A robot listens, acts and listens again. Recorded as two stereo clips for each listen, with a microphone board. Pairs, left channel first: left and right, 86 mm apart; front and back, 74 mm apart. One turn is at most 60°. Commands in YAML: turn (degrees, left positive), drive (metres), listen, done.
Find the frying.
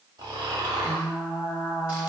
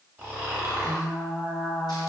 turn: 60
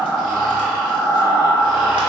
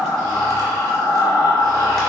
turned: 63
turn: 40
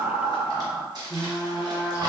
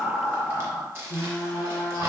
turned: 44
done: "Facing the frying, under 1 m away."